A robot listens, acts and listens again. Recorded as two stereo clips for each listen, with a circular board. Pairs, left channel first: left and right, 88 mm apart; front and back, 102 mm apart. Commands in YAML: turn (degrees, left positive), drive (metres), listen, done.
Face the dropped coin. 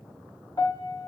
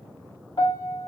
listen: true
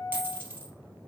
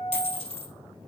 turn: -20
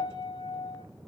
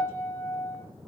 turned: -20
done: "Facing where the dropped coin came from. I can't hear it now."